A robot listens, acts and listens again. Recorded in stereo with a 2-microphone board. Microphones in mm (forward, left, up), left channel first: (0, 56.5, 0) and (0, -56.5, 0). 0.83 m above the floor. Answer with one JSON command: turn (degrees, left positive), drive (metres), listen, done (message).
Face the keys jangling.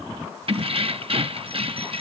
{"turn": -55}
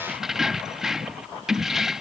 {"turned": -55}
{"done": "Facing the keys jangling."}